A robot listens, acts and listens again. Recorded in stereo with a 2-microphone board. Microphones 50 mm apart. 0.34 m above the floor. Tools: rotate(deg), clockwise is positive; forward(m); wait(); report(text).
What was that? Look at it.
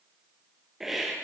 rotate(30)
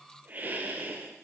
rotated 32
rotate(140)
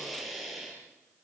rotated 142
report("Found it: a hiss, straight ahead, over 4 m away.")